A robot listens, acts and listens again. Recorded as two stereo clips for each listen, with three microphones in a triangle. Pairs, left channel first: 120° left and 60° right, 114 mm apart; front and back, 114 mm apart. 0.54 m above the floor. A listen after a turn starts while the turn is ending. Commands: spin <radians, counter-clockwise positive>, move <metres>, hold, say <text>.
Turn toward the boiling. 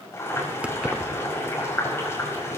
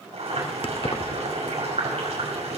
spin -3.05
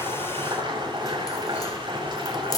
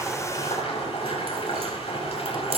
spin -0.35
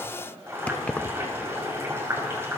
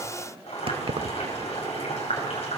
say Found it: boiling, straight ahead.